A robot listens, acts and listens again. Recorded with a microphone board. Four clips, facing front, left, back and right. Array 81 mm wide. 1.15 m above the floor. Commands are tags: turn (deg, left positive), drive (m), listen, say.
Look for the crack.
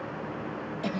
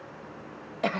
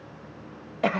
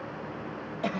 <listen/>
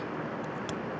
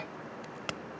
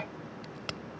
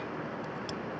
<turn deg="110"/>
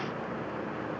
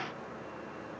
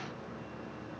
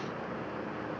<say>I heard a crack from this way, but can't make it out now.</say>